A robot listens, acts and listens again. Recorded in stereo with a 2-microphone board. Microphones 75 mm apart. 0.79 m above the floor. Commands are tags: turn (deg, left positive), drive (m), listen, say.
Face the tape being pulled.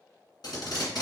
<turn deg="60"/>
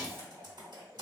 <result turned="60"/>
<listen/>
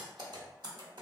<listen/>
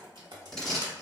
<say>Found it: tape being pulled, straight ahead.</say>